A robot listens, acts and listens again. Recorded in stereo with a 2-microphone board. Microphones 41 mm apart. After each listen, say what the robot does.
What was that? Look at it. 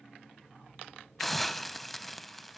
Turn 30° left.
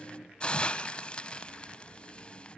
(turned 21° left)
Turn 150° left.
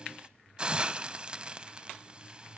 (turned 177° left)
Turn 25° right.
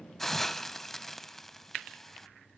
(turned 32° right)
Facing the hiss, under 1 m away.